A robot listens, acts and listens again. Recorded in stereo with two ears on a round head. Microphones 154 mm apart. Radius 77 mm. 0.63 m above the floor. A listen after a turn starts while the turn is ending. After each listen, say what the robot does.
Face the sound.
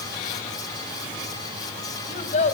Turn 40° left.
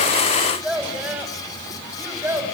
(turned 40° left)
Turn 15° right.
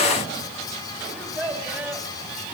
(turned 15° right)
Turn 10° right.
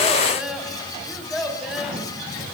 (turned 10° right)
Found it: a child speaking, straight ahead.